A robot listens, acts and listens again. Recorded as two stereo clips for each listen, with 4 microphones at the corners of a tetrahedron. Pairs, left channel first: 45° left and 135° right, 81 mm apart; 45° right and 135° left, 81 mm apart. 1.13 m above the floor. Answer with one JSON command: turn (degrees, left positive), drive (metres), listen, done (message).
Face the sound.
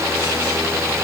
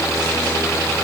{"listen": true}
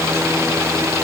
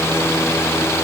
{"listen": true}
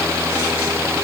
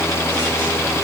{"done": "I can't make out anything to turn to."}